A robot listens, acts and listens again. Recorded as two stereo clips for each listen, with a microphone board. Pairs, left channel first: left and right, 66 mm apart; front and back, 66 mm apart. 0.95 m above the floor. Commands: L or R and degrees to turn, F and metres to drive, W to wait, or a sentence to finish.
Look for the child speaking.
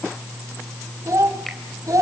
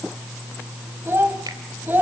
R120
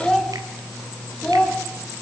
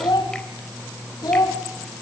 L15
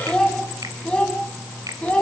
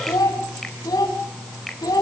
L20
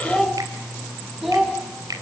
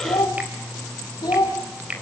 Found it: a child speaking, straight ahead, over 4 m away.